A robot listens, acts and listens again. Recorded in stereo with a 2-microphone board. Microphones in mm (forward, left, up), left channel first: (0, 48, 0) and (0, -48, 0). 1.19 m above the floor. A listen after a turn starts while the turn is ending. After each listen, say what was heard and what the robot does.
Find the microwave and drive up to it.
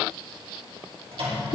Turn 90° right.
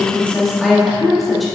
Keep listening.
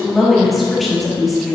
Keep listening.
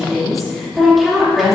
Facing where the microwave came from. I can't hear it now. I did not reach it.